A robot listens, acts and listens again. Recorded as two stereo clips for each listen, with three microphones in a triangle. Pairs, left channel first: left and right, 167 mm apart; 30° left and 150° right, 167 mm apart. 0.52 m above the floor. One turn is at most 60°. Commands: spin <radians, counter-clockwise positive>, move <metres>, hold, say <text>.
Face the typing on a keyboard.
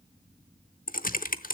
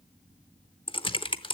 spin 1.05
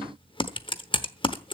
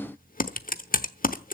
spin 0.61
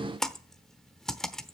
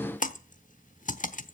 say Facing the typing on a keyboard, under 1 m away.